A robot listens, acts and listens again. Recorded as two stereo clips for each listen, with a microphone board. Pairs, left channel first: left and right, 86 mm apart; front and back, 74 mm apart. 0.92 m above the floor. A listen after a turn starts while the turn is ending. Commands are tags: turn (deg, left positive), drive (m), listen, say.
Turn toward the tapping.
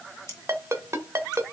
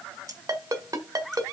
<listen/>
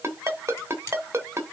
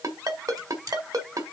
<listen/>
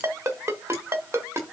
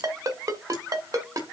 <say>I can't make out tapping to turn to.</say>